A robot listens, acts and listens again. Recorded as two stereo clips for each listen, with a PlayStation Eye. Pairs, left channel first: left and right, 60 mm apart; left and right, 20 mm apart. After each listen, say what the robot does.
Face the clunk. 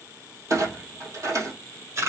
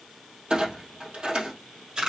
Turn 65° right.
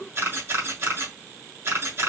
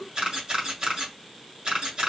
Keep listening.
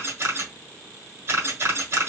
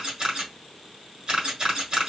I heard a clunk, but can't make it out now. It was about straight ahead or 50° right.